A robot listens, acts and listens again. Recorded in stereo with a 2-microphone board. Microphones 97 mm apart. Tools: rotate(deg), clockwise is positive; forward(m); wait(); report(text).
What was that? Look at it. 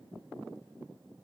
wait()
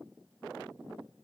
wait()
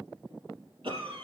rotate(70)
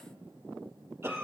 rotate(25)
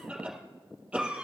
rotate(10)
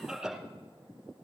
report("Found it: a cough, straight ahead.")